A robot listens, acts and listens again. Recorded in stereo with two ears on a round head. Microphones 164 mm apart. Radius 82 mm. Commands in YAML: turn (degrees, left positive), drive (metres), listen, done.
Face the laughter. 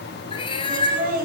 turn: -55
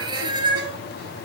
listen: true
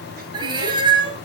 listen: true
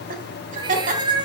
turn: -45
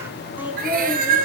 done: "Facing the laughter, 2 to 4 m away."